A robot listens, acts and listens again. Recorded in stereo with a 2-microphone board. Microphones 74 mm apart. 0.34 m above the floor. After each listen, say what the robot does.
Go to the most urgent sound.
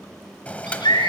Turn 90° left.
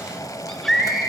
Drive 1.0 m forward.
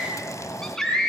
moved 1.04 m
Drive 1.0 m forward.
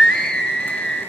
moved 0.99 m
Turn 10° left.
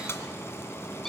Keep listening.
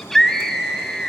Drive 1.0 m forward.
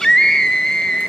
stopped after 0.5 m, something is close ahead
Turn 10° left.
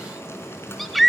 Arrived at the scream, straight ahead.